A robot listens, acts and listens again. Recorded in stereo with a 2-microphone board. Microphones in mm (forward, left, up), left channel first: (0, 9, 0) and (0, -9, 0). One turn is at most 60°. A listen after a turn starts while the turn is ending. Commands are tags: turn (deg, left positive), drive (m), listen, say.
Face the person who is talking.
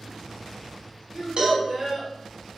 <turn deg="-45"/>
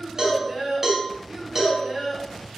<turn deg="-50"/>
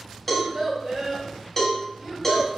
<turn deg="-35"/>
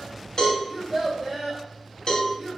<say>Found it: a child speaking, straight ahead, 2 to 4 m away.</say>